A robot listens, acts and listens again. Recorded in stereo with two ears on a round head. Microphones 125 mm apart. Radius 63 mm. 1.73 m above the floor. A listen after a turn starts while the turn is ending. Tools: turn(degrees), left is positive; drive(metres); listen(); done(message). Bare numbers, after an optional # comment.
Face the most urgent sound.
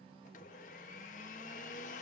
listen()
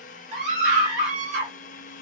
# The scream: about 55° right or 125° right.
turn(-55)
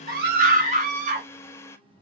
# So it is at 65° right.
turn(-65)
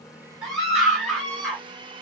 done("Facing the scream, 2 to 4 m away.")